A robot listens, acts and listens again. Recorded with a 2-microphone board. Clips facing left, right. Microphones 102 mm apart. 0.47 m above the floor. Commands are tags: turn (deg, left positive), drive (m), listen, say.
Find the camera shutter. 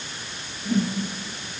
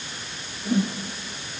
<listen/>
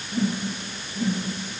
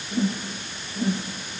<listen/>
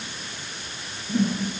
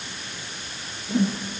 <say>I can't make out a camera shutter, only a whoosh.</say>